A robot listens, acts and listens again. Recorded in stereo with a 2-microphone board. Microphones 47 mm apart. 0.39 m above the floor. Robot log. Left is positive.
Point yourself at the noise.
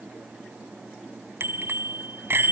note: The bicycle bell: about 50° right or 130° right.
cmd yaw -50
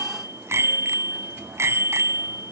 note: So it is at 75° right.
cmd yaw -75
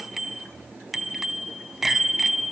end: Found it: a bicycle bell, straight ahead.